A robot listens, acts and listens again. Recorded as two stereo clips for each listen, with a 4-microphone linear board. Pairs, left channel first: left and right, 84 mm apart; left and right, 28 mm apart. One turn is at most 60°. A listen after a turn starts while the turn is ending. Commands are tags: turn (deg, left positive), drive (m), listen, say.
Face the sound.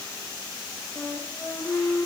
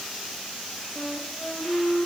<turn deg="35"/>
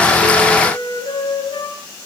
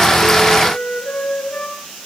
<turn deg="60"/>
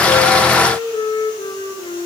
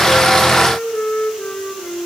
<turn deg="60"/>
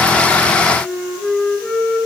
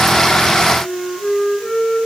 <say>Facing the flute.</say>